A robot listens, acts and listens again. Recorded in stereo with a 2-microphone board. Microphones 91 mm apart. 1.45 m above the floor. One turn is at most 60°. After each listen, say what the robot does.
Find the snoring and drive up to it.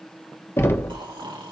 Turn 60° right.
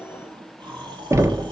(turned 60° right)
Turn 60° right.
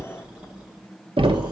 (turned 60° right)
Turn 10° right.
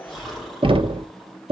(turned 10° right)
Drive 1.0 m forward.
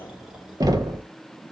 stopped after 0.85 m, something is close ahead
Something is in my way. I am facing the snoring but have not reached it.